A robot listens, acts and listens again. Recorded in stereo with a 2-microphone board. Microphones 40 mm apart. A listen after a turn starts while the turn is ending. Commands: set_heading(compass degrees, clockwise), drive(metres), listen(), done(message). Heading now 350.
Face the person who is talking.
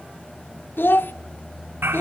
set_heading(285)
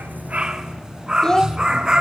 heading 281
set_heading(266)
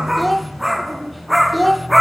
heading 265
done("Found it: a child speaking, straight ahead.")